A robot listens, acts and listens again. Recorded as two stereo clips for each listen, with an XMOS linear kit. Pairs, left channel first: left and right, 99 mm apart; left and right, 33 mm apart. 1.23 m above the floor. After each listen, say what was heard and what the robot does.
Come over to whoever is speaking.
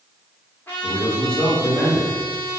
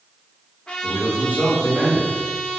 The man speaking: about 65° right or 115° right. Turn 65° right.
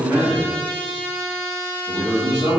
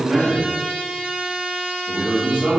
So it is at 50° right. Turn 50° right.
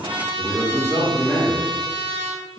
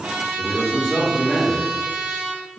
The man speaking is now 15° left. Turn 15° left.
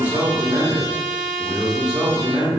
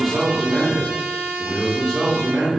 Drive 1.0 m forward.
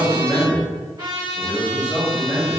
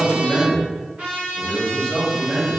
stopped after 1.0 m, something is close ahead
The man speaking is now 10° right. Turn 10° right.
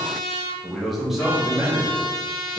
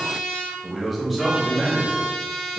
Arrived at the man speaking, straight ahead.